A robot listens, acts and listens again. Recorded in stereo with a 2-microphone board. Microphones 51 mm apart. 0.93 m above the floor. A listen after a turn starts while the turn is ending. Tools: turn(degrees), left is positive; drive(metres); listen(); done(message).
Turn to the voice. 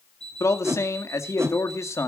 turn(degrees=65)
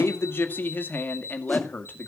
turn(degrees=40)
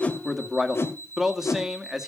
turn(degrees=-10)
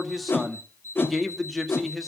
done("Found it: a man speaking, straight ahead.")